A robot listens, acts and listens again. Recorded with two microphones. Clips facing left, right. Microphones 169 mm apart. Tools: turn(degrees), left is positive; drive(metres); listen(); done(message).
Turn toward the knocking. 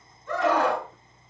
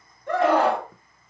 listen()
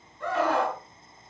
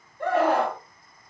listen()
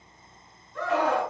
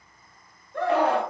done("I can't make out knocking, only a scream.")